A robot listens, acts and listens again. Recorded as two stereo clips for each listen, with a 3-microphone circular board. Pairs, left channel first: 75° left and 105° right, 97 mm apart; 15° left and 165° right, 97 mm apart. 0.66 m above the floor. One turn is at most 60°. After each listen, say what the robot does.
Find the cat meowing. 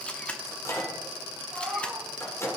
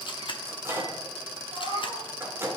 Turn 60° right.
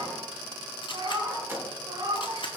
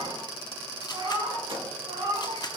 Turn 60° right.
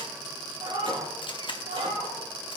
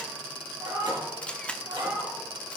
Turn 60° right.
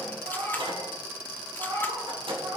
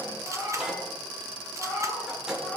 Turn 60° right.
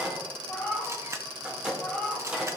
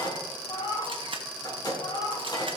Facing the cat meowing.